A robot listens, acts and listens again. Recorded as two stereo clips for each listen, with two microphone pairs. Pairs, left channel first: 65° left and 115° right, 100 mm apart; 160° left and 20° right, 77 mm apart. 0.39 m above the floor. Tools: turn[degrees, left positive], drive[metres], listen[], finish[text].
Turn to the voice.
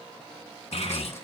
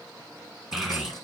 Thought: The child speaking: 70° left.
Action: turn[70]
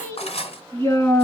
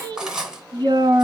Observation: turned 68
Action: finish[Found it: a child speaking, straight ahead, 2 to 4 m away.]